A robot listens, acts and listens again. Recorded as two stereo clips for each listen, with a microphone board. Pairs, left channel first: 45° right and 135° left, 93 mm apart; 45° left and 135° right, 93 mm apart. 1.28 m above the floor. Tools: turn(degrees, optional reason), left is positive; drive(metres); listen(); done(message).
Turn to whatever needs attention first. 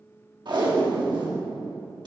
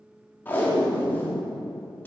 listen()
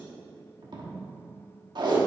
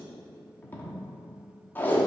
listen()
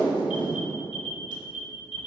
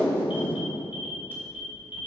turn(degrees=-60, reason="The alarm: 60° right.")
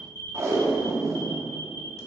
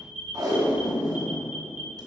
turn(degrees=15, reason="The alarm is now 15° left.")
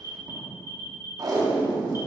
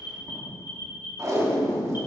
done("Facing the alarm, 1 to 2 m away.")